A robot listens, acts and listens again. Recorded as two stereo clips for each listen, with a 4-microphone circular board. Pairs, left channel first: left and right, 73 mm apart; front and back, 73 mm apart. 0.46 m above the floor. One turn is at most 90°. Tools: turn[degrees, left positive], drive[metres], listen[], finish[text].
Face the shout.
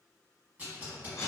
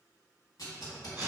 Action: listen[]
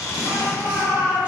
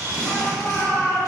Thought: The shout: 60° right.
Action: turn[-60]
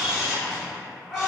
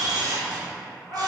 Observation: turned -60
Action: finish[Facing the shout.]